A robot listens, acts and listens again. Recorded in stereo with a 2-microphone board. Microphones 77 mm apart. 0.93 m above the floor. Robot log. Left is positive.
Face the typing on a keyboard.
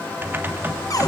note: The typing on a keyboard: about 30° right or 150° right.
cmd yaw -30
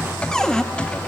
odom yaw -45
note: So it is at 15° left.
cmd yaw +15
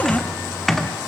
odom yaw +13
end: Facing the typing on a keyboard, 1 to 2 m away.